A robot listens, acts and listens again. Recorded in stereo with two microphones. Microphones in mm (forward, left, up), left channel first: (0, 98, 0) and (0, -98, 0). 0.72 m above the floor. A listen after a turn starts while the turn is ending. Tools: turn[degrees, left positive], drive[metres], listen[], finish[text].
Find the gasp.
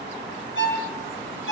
Action: listen[]
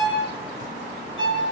Action: listen[]
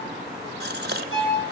Thought: The gasp: about 60° right or 120° right.
Action: turn[-60]
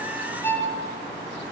Action: listen[]
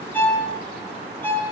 Action: finish[I heard a gasp, but can't make it out now. It was about straight ahead or 60° right.]